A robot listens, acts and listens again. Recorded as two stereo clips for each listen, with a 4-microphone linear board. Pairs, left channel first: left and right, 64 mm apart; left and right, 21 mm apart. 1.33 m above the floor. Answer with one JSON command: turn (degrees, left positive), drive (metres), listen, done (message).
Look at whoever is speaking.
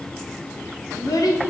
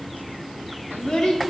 {"turn": 65}
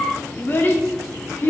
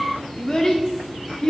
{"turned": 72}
{"turn": 35}
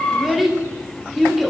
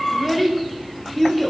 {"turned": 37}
{"done": "Found it: a child speaking, straight ahead, 1 to 2 m away."}